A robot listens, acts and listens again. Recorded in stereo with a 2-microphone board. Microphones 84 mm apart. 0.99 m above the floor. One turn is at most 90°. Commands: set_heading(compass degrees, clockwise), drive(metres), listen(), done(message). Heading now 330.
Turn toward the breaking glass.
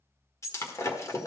set_heading(295)
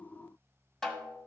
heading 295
listen()
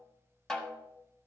done("I heard breaking glass, but can't make it out now. It was about straight ahead or 110° left.")